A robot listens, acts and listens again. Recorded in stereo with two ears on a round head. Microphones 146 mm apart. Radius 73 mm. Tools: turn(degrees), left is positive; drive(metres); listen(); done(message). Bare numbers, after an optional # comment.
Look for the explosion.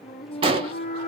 # The explosion: about 35° right or 145° right.
turn(-35)
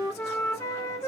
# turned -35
listen()
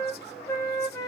done("I heard an explosion, but can't make it out now. It was about straight ahead or 110° right.")